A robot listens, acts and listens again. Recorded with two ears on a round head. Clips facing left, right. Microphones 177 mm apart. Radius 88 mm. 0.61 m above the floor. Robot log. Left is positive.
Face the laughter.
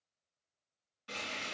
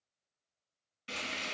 cmd idle
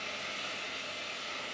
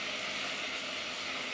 cmd idle
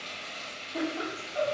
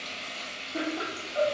note: The laughter: about 30° right or 150° right.
cmd yaw -30
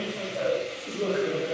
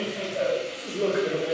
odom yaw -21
note: The laughter: about 40° right or 140° right.
cmd yaw -40
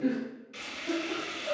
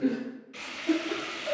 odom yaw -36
note: The laughter: about 25° right or 155° right.
cmd yaw -25
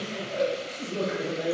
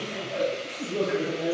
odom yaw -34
end: Facing the laughter, 1 to 2 m away.